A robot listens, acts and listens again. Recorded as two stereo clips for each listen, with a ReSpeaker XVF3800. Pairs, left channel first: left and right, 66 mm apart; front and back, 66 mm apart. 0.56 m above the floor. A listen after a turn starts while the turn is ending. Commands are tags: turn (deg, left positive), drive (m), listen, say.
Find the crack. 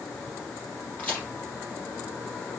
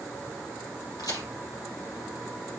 <turn deg="25"/>
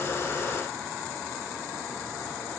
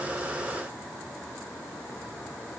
<say>Facing where the crack came from. I can't hear it now.</say>